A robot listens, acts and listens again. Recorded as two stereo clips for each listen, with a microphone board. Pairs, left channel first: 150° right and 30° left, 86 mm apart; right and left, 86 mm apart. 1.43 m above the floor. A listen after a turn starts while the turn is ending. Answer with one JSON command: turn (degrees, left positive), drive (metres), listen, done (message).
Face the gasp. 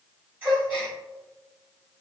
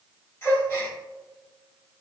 {"turn": -35}
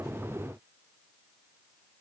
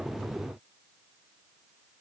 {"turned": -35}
{"done": "I heard a gasp from this way, but can't make it out now."}